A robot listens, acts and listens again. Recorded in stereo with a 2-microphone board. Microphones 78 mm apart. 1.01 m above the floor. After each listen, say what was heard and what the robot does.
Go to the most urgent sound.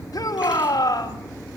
The shout: about 55° left or 125° left. Turn 55° left.
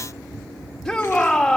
Drive 1.0 m forward.
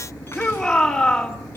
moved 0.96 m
Drive 1.0 m forward.
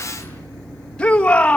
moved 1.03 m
The shout is now 15° left. Turn 15° left.
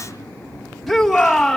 Drive 1.0 m forward.
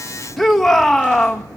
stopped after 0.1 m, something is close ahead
Arrived at the shout, straight ahead.